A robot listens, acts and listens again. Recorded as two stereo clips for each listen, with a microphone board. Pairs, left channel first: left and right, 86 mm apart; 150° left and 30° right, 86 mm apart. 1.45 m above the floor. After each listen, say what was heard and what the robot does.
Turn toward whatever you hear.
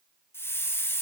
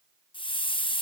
The hiss: 150° left. Turn 150° left.
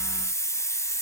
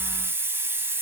The hiss is now 35° left. Turn 35° left.
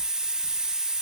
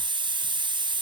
The hiss is now 10° right. Turn 10° right.
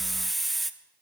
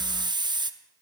Found it: a hiss, straight ahead, under 1 m away.